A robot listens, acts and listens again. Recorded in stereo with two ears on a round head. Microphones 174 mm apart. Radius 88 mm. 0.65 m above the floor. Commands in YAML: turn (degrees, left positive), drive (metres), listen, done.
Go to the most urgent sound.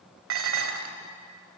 listen: true
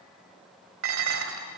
listen: true
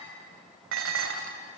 done: "I can't make out anything urgent to turn to."